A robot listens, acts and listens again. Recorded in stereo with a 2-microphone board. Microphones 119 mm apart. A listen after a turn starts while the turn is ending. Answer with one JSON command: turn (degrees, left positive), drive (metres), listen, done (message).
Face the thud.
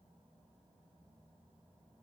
{"listen": true}
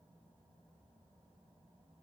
{"listen": true}
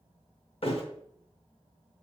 {"turn": 55}
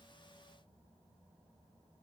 {"listen": true}
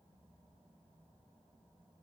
{"done": "I heard a thud, but can't make it out now. It was about straight ahead or 70° left."}